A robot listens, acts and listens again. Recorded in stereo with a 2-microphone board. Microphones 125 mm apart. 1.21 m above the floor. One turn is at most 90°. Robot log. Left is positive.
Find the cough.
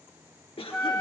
note: The cough: about 45° left or 135° left.
cmd yaw +45
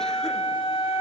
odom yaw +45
cmd idle
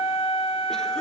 cmd idle
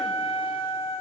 end: I heard a cough, but can't make it out now. It was about straight ahead or 90° left.